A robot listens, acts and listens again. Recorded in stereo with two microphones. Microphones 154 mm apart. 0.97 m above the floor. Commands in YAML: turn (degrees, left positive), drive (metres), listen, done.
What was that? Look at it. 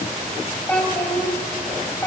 turn: 15
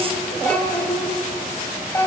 turn: 20
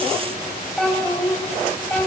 turn: 30
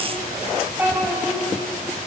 turn: -15
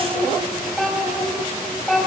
done: "Facing the child speaking, over 4 m away."